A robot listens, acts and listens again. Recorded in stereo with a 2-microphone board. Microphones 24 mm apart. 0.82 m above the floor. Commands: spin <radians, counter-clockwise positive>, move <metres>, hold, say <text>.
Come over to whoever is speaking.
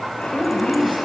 spin 1.31
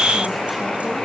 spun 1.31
hold
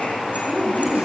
move 1.0
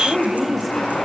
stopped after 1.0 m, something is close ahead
say Something is in my way. I am facing the woman speaking but have not reached it.